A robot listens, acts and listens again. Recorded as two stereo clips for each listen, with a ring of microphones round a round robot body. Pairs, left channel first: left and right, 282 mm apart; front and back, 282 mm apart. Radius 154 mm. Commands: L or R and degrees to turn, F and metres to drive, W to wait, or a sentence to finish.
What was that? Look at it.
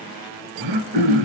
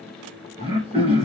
R105
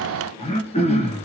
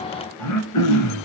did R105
L20
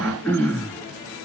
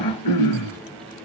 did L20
Facing the throat clearing.